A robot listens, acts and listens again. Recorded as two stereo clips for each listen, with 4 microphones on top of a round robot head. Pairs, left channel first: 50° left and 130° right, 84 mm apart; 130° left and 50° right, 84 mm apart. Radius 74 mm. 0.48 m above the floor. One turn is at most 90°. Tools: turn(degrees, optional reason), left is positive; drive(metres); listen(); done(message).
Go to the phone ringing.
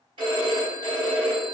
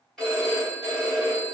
turn(degrees=-90, reason="The phone ringing: 145° right.")
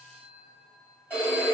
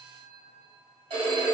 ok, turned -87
turn(degrees=-60, reason="The phone ringing is now 60° right.")
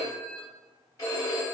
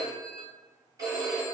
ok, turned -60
drive(metres=1.0)
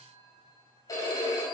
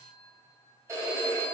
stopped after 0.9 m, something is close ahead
done("Arrived at the phone ringing, straight ahead.")